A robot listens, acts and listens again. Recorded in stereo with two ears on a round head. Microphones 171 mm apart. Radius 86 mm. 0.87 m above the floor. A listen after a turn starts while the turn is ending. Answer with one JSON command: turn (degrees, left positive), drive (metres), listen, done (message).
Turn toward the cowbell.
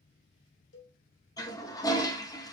{"turn": 70}
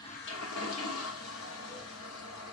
{"listen": true}
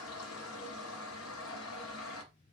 {"listen": true}
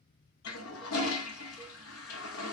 {"done": "I heard a cowbell, but can't make it out now. It was about straight ahead or 40° left."}